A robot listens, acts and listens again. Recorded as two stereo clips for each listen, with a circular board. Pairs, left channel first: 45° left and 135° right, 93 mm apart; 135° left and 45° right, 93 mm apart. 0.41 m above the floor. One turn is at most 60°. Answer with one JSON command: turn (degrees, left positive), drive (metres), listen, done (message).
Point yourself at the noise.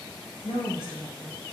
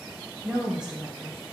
{"turn": -60}
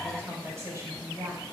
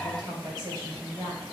{"turn": -60}
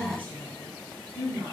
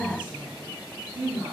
{"turn": -30}
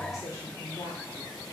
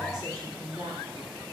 {"done": "Facing the woman speaking."}